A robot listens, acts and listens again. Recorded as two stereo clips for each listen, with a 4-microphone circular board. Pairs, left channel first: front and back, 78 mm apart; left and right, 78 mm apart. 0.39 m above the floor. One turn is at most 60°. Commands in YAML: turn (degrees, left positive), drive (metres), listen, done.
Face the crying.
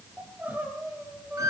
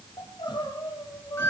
turn: 60
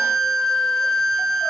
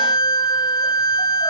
turn: 50
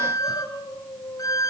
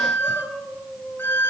done: "Found it: crying, straight ahead."